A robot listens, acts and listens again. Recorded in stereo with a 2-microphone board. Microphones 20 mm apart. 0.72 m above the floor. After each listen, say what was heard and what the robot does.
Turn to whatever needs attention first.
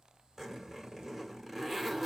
Keep listening.
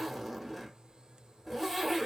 Keep listening.
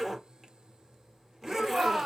The shout: about 60° right or 120° right. Turn 60° right.
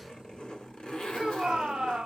So it is at 50° right. Turn 50° right.
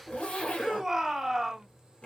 The shout is now 15° right. Turn 15° right.
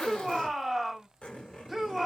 Facing the shout, 1 to 2 m away.